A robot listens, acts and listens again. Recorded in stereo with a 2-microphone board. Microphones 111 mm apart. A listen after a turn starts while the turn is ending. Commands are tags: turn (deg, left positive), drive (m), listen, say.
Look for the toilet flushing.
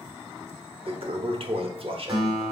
<turn deg="-55"/>
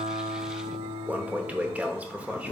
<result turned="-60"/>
<turn deg="-15"/>
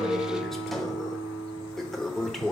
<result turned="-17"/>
<say>Found it: a toilet flushing, straight ahead, under 1 m away.</say>